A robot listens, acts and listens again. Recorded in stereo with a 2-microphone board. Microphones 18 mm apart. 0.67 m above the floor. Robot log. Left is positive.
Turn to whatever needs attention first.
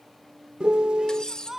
note: The shout: about 20° right or 160° right.
cmd yaw -20
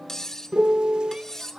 note: So it is at 135° right.
cmd yaw -135
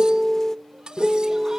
cmd idle
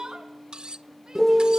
note: The shout is now 45° right.
cmd yaw -45
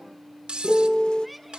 end: Found it: a shout, straight ahead.